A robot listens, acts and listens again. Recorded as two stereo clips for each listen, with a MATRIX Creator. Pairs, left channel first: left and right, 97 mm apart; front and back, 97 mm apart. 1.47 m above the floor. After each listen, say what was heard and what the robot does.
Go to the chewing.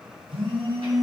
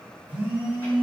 Keep listening.
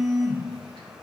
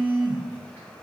Keep listening.
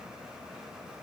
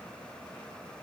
I can't make out chewing, only a phone buzzing.